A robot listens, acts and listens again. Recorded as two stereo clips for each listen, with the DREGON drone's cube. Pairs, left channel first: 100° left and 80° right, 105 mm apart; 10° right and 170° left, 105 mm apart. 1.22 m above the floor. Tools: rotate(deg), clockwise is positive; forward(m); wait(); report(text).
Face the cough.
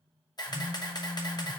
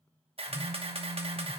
wait()
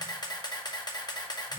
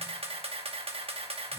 wait()
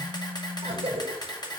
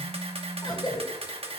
rotate(60)
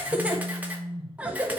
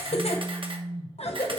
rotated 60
report("Found it: a cough, straight ahead, under 1 m away.")